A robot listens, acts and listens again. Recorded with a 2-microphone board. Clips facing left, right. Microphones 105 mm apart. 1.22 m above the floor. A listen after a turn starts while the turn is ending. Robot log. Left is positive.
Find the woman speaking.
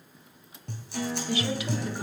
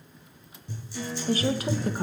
note: The woman speaking: about 45° right or 135° right.
cmd yaw -45
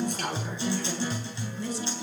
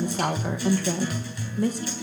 note: The woman speaking: about 50° right or 130° right.
cmd yaw -50
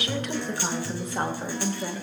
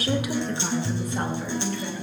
note: So it is at 35° left.
cmd yaw +35
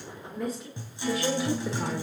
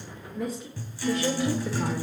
end: Facing the woman speaking, 2 to 4 m away.